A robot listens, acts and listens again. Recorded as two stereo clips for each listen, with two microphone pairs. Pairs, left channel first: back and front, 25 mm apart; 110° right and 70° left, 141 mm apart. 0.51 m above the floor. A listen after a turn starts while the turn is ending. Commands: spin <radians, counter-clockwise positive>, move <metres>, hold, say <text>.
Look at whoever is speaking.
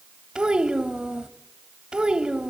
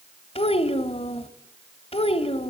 spin -1.05
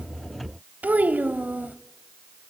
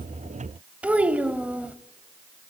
spin -0.17
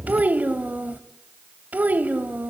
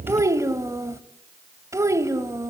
say Facing the child speaking, 1 to 2 m away.